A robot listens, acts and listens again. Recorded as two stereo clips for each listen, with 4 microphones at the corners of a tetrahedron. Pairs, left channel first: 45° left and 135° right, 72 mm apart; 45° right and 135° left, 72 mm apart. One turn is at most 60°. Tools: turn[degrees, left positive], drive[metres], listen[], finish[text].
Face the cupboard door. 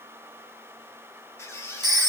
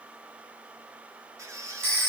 Action: listen[]
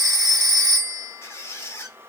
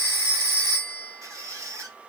Action: listen[]
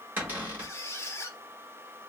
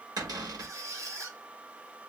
Thought: The cupboard door: 160° left.
Action: turn[60]
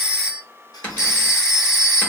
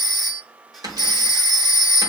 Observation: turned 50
Thought: The cupboard door is now 110° left.
Action: turn[60]
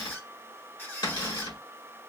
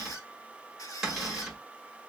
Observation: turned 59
Thought: The cupboard door is now 50° left.
Action: turn[50]
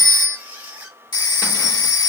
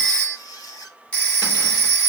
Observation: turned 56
Thought: Nothing new. It was at 10° right.
Action: turn[-10]
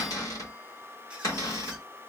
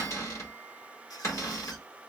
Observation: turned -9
Action: finish[Facing the cupboard door.]